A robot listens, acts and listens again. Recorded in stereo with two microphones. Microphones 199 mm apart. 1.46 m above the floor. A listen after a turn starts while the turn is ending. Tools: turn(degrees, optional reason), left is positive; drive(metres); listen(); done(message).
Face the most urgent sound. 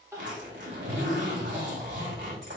turn(degrees=-30)
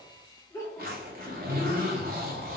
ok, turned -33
turn(degrees=20, reason="So it is at 20° left.")
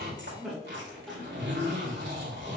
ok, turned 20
done("Found it: crying, straight ahead, 1 to 2 m away.")